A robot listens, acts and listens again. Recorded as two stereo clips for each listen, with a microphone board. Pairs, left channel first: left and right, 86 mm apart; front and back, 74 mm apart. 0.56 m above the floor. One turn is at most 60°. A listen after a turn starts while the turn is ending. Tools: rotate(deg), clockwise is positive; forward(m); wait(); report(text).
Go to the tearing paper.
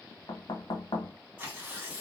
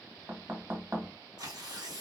rotate(60)
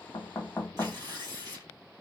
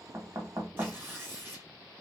rotate(60)
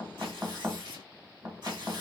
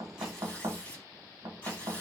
rotate(60)
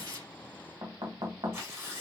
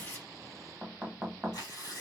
rotate(30)
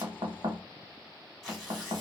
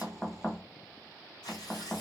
forward(1.0)
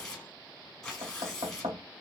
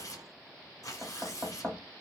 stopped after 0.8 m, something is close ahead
rotate(-10)
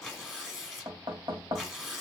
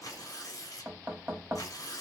report("Arrived at the tearing paper, straight ahead.")